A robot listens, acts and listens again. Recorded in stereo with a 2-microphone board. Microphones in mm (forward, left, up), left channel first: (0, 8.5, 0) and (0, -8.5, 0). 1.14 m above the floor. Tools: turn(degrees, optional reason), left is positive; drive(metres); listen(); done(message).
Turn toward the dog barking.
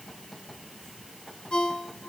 listen()
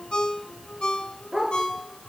turn(degrees=-50, reason="The dog barking: about 50° right or 130° right.")
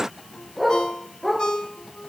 done("Facing the dog barking.")